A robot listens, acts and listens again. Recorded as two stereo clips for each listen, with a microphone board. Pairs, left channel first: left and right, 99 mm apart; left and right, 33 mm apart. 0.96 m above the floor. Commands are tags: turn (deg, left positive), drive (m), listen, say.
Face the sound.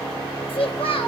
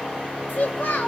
<turn deg="70"/>
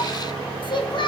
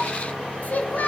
<turn deg="55"/>
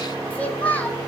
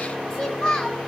<turn deg="15"/>
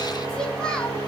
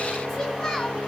<listen/>
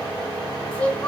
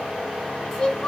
<turn deg="10"/>
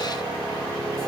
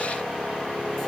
<listen/>
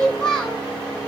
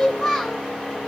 <turn deg="10"/>
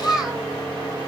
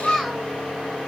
<say>Facing the child speaking.</say>